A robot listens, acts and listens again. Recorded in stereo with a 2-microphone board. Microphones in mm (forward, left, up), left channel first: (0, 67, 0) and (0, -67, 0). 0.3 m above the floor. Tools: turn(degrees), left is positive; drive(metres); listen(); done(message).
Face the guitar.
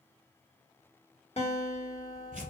turn(degrees=55)
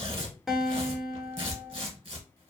done("Found it: a guitar, straight ahead, under 1 m away.")